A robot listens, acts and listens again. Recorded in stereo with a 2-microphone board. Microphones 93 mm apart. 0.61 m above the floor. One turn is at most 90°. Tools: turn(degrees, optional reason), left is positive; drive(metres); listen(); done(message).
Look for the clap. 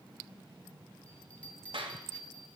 turn(degrees=-90)
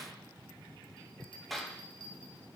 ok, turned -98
done("Found it: a clap, straight ahead.")